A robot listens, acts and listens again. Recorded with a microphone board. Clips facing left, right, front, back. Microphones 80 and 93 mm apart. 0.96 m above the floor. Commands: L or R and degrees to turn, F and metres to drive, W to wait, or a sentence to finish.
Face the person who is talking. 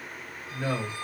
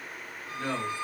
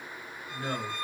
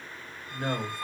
L160
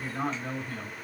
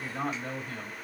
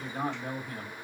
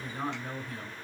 Facing the man speaking.